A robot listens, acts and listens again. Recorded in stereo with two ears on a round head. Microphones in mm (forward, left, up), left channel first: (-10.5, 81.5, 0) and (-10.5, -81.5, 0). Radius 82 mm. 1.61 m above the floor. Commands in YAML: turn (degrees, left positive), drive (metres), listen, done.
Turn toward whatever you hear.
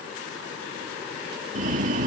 turn: -45
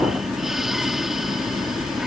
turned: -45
done: "Found it: breathing, straight ahead."